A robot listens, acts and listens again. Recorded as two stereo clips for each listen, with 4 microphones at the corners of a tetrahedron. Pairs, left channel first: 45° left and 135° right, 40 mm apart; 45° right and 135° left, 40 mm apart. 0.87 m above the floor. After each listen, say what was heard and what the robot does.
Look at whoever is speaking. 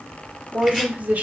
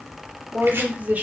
The woman speaking: straight behind. Turn 180° left.
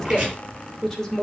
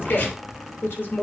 The woman speaking is now 35° right. Turn 35° right.
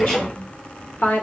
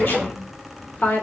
Facing the woman speaking, 2 to 4 m away.